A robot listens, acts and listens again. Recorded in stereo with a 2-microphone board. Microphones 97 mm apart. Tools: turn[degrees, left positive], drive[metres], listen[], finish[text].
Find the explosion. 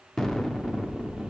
Action: turn[30]
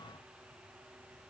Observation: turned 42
Action: listen[]
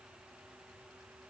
Action: finish[I heard an explosion, but can't make it out now. It was about 35° right or 130° left.]